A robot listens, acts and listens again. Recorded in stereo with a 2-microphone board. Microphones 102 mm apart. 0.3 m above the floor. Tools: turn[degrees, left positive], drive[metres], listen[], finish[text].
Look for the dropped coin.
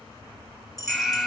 Thought: The dropped coin: about 35° left or 145° left.
Action: turn[35]
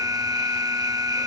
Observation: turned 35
Action: listen[]
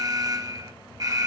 Action: finish[I heard a dropped coin, but can't make it out now. It was about straight ahead or 110° left.]